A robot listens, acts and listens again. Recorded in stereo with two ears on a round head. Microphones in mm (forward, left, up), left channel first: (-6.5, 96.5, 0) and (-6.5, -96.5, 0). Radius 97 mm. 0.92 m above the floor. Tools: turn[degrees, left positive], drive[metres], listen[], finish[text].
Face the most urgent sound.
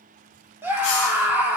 Action: turn[-30]
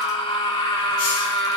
Thought: So it is at 20° left.
Action: turn[20]
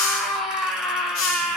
Action: finish[Facing the scream.]